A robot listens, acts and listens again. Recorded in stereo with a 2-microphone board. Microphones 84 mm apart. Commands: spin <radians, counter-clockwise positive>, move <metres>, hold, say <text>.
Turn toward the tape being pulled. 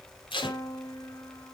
spin 1.57
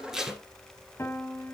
say Facing the tape being pulled, 2 to 4 m away.